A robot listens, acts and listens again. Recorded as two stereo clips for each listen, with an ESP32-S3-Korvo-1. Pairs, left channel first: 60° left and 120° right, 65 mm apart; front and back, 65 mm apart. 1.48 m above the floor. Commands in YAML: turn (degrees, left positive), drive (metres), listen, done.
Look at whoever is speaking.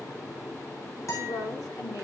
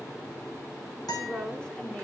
turn: 75
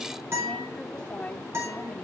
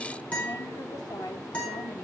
turn: -15
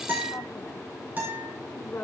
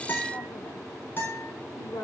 done: "Facing the woman speaking."